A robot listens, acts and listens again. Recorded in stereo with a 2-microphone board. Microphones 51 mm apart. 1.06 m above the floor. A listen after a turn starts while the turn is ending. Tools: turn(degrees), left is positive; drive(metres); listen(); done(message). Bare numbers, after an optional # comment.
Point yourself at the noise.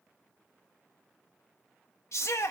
# The shout: about 75° left or 105° left.
turn(75)
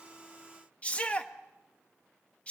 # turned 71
# So it is at 25° left.
turn(25)
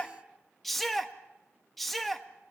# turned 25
done("Facing the shout, 1 to 2 m away.")